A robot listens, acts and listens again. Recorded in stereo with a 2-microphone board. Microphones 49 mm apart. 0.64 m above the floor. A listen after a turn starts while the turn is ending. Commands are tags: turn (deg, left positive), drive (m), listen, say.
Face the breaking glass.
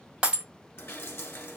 <turn deg="-25"/>
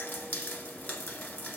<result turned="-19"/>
<listen/>
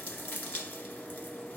<say>I heard breaking glass, but can't make it out now. It was about 5° right or 140° right.</say>